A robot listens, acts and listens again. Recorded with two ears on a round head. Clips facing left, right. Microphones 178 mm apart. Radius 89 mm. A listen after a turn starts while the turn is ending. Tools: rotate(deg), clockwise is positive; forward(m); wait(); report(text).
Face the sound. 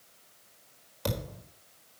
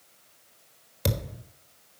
rotate(25)
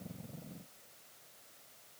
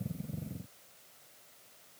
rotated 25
wait()
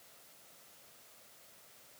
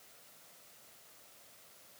report("I heard a thud, but can't make it out now. It was about straight ahead or 130° right.")